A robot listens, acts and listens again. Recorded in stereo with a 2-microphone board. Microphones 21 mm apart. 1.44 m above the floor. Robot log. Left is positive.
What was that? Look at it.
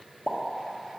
note: The pop: about 75° left or 105° left.
cmd yaw +75
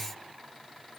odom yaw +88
cmd idle
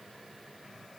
end: I heard a pop, but can't make it out now. It was about 15° right or 20° left.